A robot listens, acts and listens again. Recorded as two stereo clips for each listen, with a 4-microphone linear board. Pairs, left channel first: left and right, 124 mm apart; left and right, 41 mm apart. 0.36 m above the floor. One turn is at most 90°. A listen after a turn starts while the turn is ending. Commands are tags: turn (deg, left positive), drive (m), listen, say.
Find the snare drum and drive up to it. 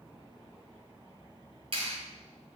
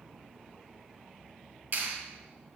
<listen/>
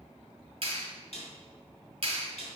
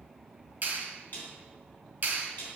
<turn deg="55"/>
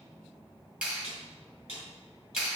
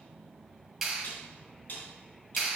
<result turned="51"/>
<turn deg="65"/>
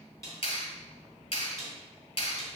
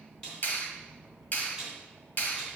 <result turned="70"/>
<drive m="1.0"/>
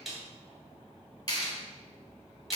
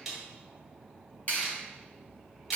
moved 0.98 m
<drive m="1.0"/>
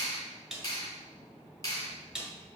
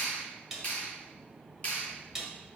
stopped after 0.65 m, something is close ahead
<say>I am next to the snare drum.</say>